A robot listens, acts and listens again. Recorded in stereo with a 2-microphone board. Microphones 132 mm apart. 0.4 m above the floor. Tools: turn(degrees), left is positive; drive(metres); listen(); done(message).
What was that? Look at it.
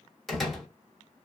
turn(degrees=30)
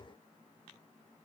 listen()
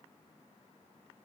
done("I heard a door slam, but can't make it out now. It was about 30° right or 150° left.")